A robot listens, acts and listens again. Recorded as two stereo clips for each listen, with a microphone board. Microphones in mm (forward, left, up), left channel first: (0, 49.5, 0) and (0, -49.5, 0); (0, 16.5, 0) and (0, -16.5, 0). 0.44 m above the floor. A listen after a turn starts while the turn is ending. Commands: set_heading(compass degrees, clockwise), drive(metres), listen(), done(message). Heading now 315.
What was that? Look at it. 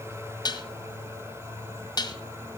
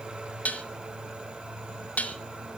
set_heading(270)
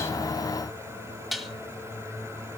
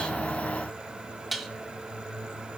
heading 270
done("Found it: dishes clattering, straight ahead.")